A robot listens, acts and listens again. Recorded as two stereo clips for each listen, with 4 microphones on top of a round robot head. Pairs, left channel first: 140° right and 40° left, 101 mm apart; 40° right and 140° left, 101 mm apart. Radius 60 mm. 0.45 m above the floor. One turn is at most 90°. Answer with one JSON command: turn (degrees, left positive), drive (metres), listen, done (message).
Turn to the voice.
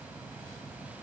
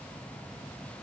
{"listen": true}
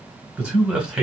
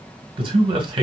{"turn": 90}
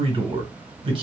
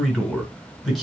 {"turn": 50}
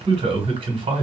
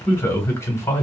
{"turn": 20}
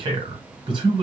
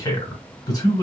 {"done": "Found it: a man speaking, straight ahead."}